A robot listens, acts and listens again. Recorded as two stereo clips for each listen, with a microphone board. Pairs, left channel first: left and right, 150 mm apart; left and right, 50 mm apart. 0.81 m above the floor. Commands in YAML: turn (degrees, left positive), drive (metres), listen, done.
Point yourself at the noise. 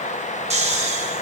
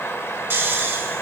turn: -45
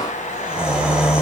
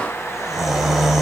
done: "Facing the snoring, under 1 m away."